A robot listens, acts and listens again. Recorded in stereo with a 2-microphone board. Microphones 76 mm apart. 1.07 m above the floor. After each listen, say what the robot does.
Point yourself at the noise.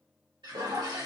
Turn 70° right.
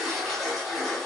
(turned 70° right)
Found it: a toilet flushing, straight ahead.